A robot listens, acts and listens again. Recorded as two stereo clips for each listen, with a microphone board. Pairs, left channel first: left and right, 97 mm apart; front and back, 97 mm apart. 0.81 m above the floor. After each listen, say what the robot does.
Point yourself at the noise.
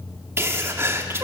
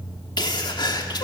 Turn 30° right.
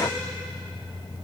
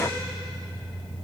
I heard a sneeze from this way, but can't make it out now.